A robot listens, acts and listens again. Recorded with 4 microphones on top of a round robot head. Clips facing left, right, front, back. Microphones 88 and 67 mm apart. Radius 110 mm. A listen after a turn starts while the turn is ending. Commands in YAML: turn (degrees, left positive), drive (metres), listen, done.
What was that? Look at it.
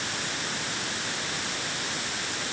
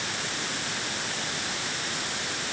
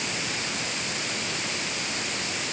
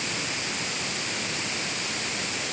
listen: true
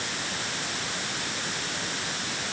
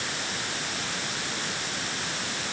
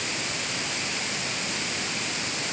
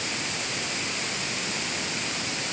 listen: true
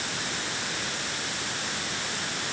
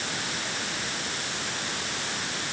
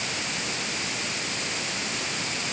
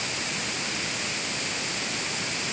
done: "I can't make out anything to turn to."